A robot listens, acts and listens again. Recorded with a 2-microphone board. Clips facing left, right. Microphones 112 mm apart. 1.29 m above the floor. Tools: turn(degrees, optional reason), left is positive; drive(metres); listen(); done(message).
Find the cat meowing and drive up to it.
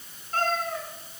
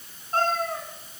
turn(degrees=-40, reason="The cat meowing: about 40° right or 140° right.")
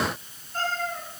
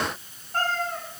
turn(degrees=-100, reason="So it is at 100° right.")
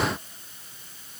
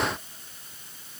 listen()
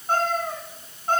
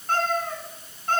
turn(degrees=20, reason="The cat meowing is now 20° left.")
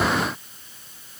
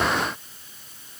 listen()
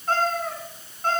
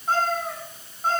turn(degrees=-10, reason="The cat meowing is now 10° right.")
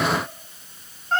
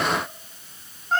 drive(metres=1.0)
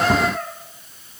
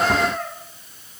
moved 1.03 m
drive(metres=1.0)
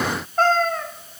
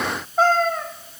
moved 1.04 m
drive(metres=1.0)
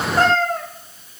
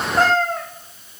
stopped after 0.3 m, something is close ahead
done("I am next to the cat meowing.")